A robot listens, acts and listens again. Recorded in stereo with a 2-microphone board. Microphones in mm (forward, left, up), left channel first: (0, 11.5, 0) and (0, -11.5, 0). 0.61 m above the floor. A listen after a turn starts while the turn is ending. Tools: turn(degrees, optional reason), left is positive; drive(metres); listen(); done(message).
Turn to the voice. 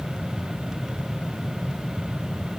listen()
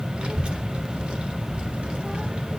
turn(degrees=-55, reason="The child speaking: about 55° right or 125° right.")
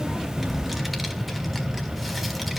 done("Found it: a child speaking, straight ahead.")